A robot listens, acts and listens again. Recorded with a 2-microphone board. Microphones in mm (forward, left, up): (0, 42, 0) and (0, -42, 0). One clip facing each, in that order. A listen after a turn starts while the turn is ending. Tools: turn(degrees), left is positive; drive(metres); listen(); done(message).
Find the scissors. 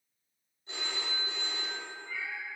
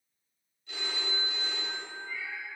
listen()
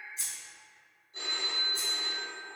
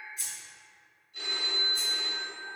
turn(degrees=30)
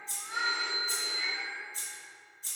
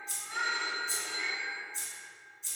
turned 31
turn(degrees=120)
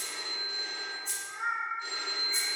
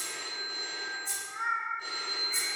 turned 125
done("Found it: scissors, straight ahead, 1 to 2 m away.")